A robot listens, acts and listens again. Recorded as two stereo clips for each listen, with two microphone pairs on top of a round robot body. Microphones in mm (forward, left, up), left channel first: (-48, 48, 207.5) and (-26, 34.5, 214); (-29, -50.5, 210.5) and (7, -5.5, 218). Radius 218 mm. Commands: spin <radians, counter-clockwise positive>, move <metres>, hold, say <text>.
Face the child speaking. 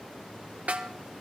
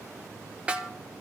hold
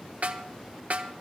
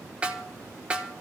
hold
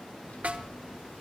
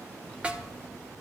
spin 2.36
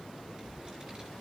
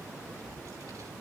spin 0.44
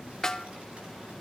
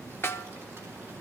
say Found it: a child speaking, straight ahead.